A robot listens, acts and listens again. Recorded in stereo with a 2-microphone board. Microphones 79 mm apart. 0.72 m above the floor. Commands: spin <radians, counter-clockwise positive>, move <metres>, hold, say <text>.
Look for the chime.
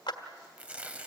hold
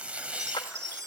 spin -0.61
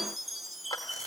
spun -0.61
say Facing the chime, under 1 m away.